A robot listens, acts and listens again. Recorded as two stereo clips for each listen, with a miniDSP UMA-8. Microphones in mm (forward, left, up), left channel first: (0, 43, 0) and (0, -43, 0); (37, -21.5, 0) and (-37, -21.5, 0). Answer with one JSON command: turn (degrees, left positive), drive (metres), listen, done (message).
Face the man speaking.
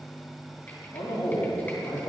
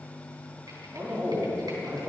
{"turn": 100}
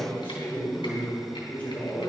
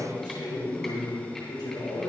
{"turn": 20}
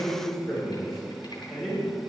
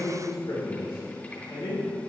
{"done": "Facing the man speaking, over 4 m away."}